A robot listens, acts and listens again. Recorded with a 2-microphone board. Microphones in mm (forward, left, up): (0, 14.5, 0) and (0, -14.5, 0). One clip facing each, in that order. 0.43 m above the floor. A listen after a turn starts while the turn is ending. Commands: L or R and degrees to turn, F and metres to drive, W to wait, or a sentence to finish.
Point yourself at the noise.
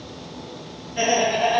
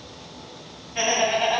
R55
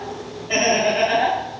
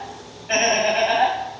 R65
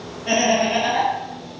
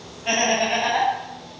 R40
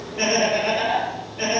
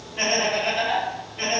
R35
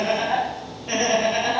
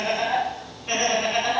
R30
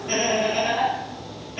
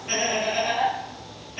L10
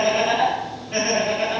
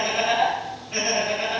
Facing the laughter.